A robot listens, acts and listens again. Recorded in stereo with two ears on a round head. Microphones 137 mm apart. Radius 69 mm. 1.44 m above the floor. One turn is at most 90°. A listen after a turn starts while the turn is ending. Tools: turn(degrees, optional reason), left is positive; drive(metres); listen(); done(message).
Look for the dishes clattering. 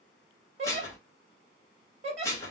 turn(degrees=20, reason="The dishes clattering: about 20° left or 160° left.")
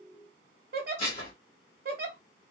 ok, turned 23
turn(degrees=90, reason="So it is at 135° left.")
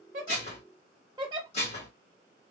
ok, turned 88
turn(degrees=45, reason="The dishes clattering is now 45° left.")
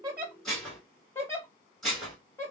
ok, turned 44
done("Facing the dishes clattering, 1 to 2 m away.")